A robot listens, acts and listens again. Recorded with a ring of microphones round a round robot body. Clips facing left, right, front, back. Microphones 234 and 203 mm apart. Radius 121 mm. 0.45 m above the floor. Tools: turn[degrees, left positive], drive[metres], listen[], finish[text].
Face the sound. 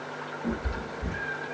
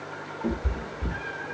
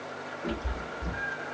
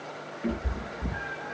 Thought: The cat meowing: 120° right.
Action: turn[-120]
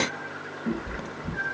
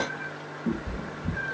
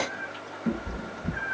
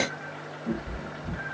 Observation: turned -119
Thought: The cat meowing is now 15° right.
Action: turn[-15]
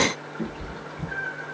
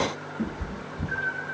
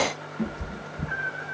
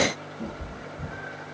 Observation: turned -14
Thought: The cat meowing is now 15° right.
Action: turn[-15]
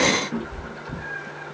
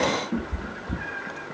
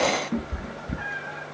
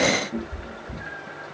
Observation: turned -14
Thought: The cat meowing is now 15° right.
Action: turn[-15]
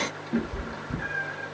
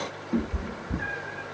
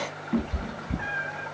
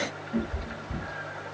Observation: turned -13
Action: finish[Facing the cat meowing, 1 to 2 m away.]